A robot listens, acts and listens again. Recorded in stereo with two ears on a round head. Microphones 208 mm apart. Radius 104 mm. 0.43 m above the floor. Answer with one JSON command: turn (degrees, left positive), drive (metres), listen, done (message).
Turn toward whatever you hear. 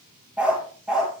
{"turn": -30}
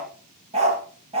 {"turn": -155}
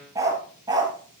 {"turn": -20}
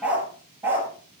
{"turn": -10}
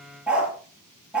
{"done": "Facing the dog barking."}